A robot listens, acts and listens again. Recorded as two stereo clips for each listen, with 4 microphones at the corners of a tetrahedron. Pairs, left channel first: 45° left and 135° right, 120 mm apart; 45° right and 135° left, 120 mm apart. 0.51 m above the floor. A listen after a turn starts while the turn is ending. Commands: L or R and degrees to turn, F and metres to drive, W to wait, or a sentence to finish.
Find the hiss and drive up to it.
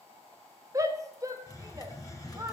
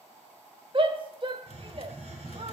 L105
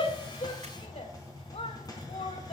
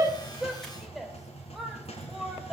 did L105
R15
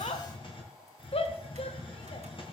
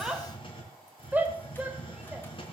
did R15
F1.0
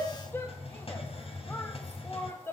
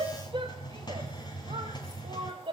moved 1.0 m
L10
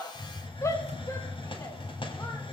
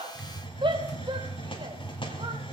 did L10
F1.0
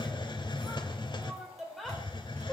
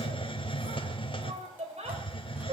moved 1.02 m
F1.0
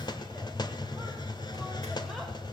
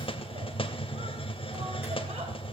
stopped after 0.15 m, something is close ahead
Arrived at the hiss, straight ahead.